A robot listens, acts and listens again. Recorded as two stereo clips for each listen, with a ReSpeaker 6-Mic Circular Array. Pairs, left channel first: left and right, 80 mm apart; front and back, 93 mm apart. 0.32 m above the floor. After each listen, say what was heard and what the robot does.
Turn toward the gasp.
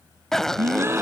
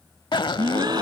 The gasp: 145° right. Turn 145° right.
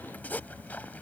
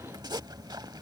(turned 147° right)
I heard a gasp from this way, but can't make it out now.